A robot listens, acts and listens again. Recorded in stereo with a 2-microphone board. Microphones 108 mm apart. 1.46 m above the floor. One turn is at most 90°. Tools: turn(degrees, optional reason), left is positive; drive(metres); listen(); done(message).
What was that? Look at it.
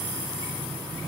listen()
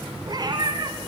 turn(degrees=-40, reason="The cat meowing: about 40° right or 140° right.")
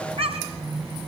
turn(degrees=-90, reason="So it is at 110° right.")
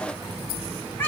turn(degrees=20, reason="The cat meowing is now 20° left.")
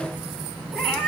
turn(degrees=10, reason="The cat meowing is now 10° left.")
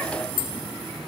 listen()
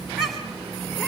done("Facing the cat meowing, 2 to 4 m away.")